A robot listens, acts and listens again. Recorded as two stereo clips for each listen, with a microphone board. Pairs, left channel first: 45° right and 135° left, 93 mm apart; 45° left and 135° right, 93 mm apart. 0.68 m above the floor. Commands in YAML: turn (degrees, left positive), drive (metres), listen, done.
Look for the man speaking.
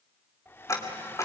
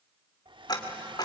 listen: true
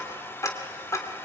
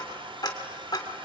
listen: true
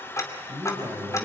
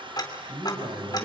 turn: -165
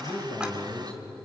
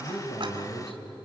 turn: 35
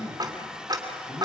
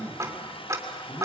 turn: -15
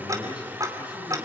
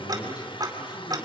done: "Found it: a man speaking, straight ahead, over 4 m away."